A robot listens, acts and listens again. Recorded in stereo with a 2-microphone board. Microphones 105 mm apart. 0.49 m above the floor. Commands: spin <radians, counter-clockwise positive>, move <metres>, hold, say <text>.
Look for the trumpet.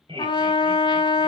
spin 0.87
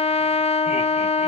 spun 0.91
spin 1.40
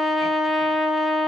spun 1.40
say Facing the trumpet, under 1 m away.